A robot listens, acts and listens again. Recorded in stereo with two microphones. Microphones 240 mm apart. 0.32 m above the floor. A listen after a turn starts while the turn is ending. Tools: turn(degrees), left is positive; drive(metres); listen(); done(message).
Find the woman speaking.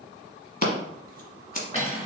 listen()
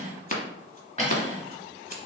listen()
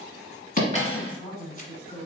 turn(degrees=30)
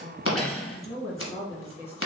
turn(degrees=155)
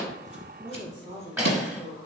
turn(degrees=-20)
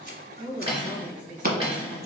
done("Facing the woman speaking.")